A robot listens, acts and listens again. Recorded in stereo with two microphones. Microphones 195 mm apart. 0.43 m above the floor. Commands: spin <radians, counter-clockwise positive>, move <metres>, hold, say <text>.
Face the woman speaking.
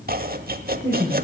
spin 0.52
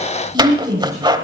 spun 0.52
spin -0.26
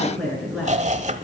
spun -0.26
say Facing the woman speaking, over 4 m away.